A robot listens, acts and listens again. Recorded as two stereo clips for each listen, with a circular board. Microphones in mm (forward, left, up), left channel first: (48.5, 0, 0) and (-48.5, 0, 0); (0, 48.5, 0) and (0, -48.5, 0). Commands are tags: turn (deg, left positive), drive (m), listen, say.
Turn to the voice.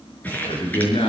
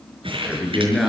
<say>Found it: a man speaking, straight ahead.</say>